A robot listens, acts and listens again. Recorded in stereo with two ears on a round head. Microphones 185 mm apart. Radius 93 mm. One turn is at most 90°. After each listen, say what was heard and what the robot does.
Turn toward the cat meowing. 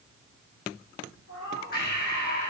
Turn 90° left.
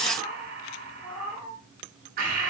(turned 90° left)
Found it: a cat meowing, straight ahead, over 4 m away.